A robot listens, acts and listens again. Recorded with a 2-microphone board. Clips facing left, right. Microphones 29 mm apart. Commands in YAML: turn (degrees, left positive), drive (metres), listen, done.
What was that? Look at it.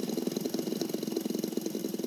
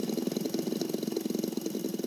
listen: true
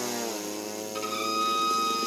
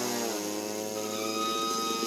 turn: 45
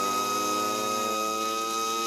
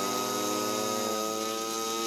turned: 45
turn: 90
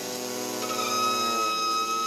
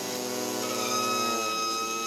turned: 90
turn: 25
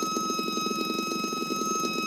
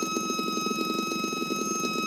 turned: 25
turn: 10
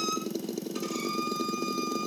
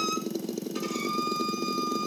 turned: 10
done: "Facing the violin."